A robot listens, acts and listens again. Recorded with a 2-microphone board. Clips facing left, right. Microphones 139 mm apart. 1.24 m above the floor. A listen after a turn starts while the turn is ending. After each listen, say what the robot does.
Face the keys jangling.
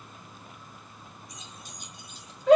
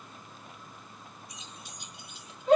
Turn 45° left.
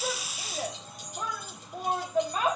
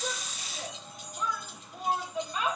Turn 105° left.
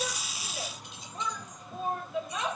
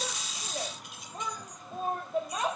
Keep listening.
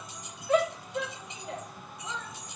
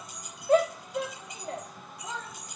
Turn 25° left.
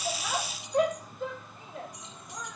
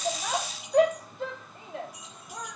Turn 10° right.
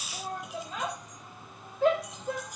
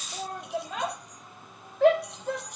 Facing the keys jangling.